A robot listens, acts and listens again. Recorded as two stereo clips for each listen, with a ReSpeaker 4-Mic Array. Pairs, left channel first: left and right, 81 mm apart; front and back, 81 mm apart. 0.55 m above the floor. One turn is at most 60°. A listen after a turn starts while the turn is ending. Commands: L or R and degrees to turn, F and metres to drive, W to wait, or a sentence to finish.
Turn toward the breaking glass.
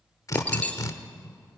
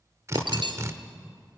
L60
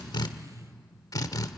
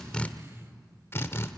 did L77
L60
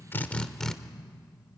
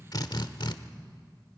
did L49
L35
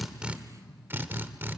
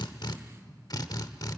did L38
Facing where the breaking glass came from. I can't hear it now.